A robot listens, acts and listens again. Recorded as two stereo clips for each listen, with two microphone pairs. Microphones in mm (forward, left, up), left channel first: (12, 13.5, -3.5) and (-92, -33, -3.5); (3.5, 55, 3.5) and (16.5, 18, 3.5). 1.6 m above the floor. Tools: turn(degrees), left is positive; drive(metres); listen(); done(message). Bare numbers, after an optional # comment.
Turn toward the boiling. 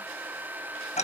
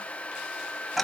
listen()
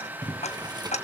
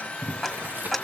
# The boiling: 105° right.
turn(-105)
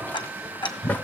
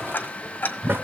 # The boiling is now 55° right.
turn(-55)
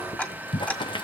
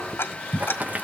# The boiling is now 20° right.
turn(-20)
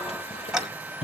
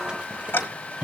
done("Found it: boiling, straight ahead, 1 to 2 m away.")